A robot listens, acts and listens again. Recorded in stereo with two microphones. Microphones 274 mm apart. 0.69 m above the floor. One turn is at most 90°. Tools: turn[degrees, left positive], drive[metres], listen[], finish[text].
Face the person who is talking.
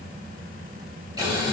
Action: listen[]
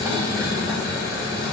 Action: listen[]
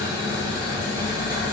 Action: finish[I can't make out anyone speaking, only boiling.]